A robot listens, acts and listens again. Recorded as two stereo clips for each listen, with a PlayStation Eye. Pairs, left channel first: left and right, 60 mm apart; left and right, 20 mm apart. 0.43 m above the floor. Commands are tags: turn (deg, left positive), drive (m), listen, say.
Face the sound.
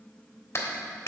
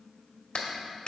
<turn deg="50"/>
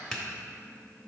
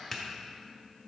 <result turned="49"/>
<turn deg="10"/>
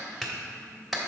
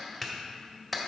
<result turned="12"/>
<say>Found it: a clap, straight ahead.</say>